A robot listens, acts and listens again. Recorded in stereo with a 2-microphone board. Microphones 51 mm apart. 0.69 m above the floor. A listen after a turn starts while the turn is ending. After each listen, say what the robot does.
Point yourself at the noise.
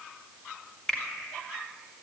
Turn 15° left.
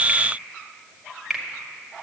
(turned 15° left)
Facing the finger snap.